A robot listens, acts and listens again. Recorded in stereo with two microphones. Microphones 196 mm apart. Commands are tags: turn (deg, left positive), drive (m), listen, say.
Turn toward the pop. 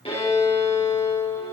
<listen/>
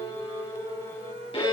<listen/>
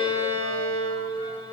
<say>I can't make out a pop to turn to.</say>